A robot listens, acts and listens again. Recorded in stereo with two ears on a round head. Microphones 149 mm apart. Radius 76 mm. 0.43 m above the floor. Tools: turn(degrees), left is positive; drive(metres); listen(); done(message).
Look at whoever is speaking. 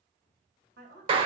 turn(degrees=-55)
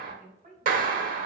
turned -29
turn(degrees=-55)
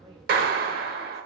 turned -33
turn(degrees=-20)
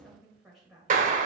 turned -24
done("Found it: a woman speaking, straight ahead.")